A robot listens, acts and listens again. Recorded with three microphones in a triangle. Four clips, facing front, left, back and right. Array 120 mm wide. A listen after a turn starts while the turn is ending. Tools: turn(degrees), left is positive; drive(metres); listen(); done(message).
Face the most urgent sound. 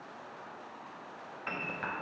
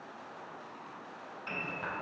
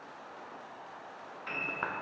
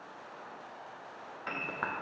listen()
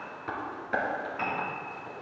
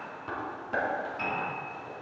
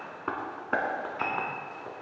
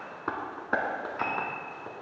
listen()
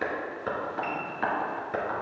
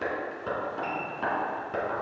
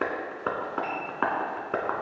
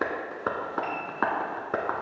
done("I can't make out anything urgent, only a piano and tapping.")